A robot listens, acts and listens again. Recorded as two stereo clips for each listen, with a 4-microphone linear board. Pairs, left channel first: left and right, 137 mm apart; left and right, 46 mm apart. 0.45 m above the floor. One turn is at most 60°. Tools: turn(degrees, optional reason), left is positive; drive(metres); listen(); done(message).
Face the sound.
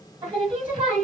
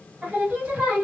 turn(degrees=-35, reason="The singing: about 35° right or 145° right.")
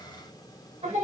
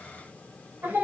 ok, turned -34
turn(degrees=-60, reason="So it is at 105° right.")
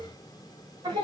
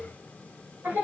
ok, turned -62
turn(degrees=-40, reason="The singing is now 40° right.")
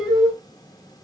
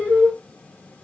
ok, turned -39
done("Facing the singing, 1 to 2 m away.")